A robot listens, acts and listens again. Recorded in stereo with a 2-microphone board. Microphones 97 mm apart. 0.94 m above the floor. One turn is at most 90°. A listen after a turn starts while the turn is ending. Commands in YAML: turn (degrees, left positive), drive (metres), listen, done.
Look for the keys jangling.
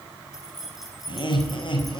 turn: 30
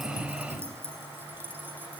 turn: -20
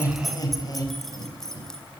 done: "Facing the keys jangling, 2 to 4 m away."